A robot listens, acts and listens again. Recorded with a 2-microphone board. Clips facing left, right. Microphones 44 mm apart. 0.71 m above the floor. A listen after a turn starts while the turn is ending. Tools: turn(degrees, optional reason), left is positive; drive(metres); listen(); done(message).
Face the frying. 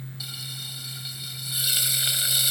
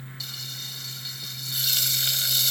turn(degrees=30)
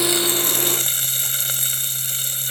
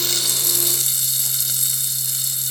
turn(degrees=135, reason="So it is at 135° left.")
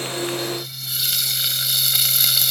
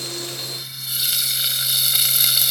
done("Facing the frying.")